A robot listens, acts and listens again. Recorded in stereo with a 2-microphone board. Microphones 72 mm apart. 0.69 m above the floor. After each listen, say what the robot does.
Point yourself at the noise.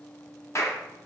Turn 45° left.
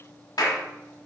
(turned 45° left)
Turn 80° left.
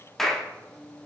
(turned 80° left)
Facing the clap, 1 to 2 m away.